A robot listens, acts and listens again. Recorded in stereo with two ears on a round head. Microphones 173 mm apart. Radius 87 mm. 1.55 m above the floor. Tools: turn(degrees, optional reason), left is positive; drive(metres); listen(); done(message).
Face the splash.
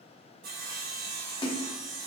turn(degrees=25, reason="The splash: about 25° left or 155° left.")
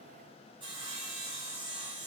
listen()
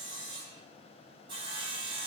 done("I heard a splash, but can't make it out now. It was about straight ahead or 130° left.")